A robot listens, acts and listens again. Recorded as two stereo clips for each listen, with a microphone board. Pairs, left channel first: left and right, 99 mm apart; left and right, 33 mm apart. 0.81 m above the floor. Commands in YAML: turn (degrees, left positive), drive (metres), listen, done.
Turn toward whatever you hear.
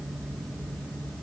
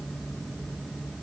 listen: true
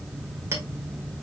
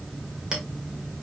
turn: -25
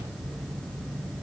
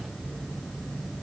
listen: true
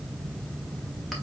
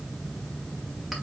listen: true
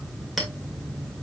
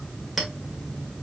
done: "Found it: a clink, straight ahead."